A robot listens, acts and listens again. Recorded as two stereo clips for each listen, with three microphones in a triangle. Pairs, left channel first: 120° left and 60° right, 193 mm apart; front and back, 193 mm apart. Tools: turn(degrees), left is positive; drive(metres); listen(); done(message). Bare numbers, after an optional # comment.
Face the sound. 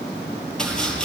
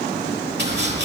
# The chopping: 155° right.
turn(-155)
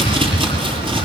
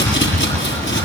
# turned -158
done("Found it: chopping, straight ahead, over 4 m away.")